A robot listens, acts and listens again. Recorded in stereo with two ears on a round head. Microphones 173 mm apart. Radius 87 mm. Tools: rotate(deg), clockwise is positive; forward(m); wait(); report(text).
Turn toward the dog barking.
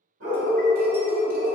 rotate(75)
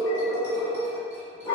rotate(-30)
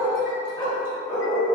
rotate(-25)
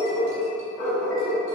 rotate(-10)
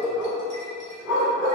report("Found it: a dog barking, straight ahead, 1 to 2 m away.")